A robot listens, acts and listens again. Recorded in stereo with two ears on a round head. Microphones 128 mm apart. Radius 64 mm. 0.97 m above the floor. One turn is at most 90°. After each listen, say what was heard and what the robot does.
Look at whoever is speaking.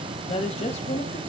The woman speaking: about 50° left or 130° left. Turn 50° left.
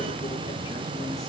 Keep listening.
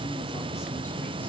Keep listening.
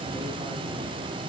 I heard a woman speaking, but can't make it out now. It was about straight ahead or 80° left.